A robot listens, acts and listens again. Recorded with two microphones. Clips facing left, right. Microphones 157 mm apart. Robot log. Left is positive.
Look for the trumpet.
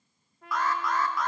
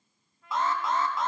cmd yaw +90
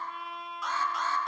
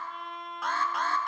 end: Found it: a trumpet, straight ahead, 2 to 4 m away.